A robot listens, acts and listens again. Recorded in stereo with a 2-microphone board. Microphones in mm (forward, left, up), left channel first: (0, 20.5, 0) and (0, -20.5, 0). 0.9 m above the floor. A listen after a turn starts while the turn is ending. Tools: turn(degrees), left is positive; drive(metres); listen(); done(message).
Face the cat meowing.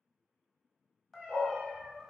turn(degrees=-20)
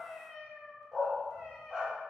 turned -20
turn(degrees=-20)
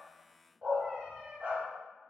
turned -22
turn(degrees=-30)
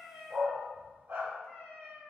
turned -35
turn(degrees=10)
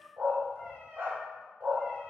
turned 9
done("Found it: a cat meowing, straight ahead.")